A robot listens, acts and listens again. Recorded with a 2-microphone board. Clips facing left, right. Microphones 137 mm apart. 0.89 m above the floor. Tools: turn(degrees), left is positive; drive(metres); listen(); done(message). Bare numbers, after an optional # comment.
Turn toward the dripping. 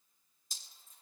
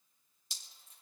# The dripping: about 75° right or 105° right.
turn(-75)
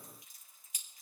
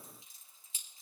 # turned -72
# So it is at 25° right.
turn(-25)
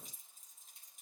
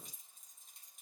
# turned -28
done("Facing the dripping, 2 to 4 m away.")